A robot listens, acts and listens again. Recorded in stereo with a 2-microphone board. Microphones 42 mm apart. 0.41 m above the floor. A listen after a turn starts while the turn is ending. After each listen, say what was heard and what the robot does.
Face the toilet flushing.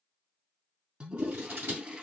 The toilet flushing: about 30° right or 150° right. Turn 30° right.
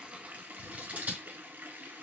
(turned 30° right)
So it is at 120° right. Turn 120° right.
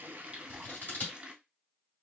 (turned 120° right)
The toilet flushing is now 20° right. Turn 20° right.
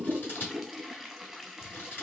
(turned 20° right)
Facing the toilet flushing.